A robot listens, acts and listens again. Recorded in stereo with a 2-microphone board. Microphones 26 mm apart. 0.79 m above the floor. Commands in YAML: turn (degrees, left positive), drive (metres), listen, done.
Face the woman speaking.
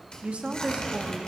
turn: -55
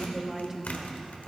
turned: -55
turn: -10
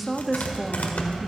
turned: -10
done: "Facing the woman speaking, under 1 m away."